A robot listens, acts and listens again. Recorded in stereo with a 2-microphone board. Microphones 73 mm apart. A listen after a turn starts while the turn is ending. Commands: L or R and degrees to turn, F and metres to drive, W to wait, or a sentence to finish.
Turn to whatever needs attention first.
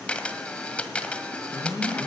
L55
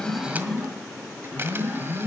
Facing the alarm.